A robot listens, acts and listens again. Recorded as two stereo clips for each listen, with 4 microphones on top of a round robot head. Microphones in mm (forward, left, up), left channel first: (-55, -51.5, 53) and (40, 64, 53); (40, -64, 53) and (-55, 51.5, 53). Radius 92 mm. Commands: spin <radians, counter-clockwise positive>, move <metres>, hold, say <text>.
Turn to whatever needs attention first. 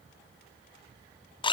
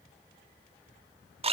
hold
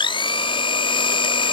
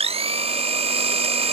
hold
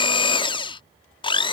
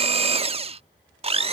say I can't make out anything urgent, only a blender.